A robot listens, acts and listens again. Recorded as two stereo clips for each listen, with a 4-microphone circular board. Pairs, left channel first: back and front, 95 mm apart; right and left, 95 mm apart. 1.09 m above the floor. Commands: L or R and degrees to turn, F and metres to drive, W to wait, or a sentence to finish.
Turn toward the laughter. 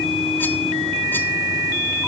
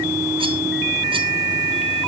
W
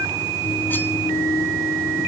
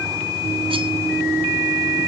W
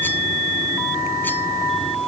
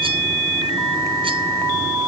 I can't make out laughter to turn to.